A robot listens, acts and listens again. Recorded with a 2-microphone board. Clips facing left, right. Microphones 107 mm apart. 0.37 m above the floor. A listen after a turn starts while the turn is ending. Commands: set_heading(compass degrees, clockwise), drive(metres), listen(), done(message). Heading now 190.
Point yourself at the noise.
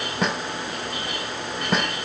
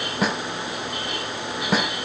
set_heading(160)
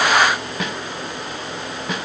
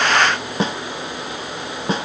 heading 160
set_heading(190)
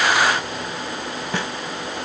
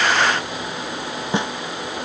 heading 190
set_heading(210)
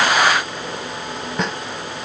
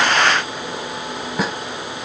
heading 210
done("Found it: a snare drum, straight ahead.")